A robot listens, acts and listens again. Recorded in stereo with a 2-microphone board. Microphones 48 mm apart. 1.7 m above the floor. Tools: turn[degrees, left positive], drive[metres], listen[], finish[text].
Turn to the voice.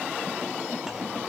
Action: listen[]
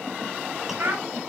Thought: The child speaking: about 55° right or 125° right.
Action: turn[-55]
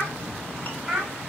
Action: finish[Found it: a child speaking, straight ahead, 2 to 4 m away.]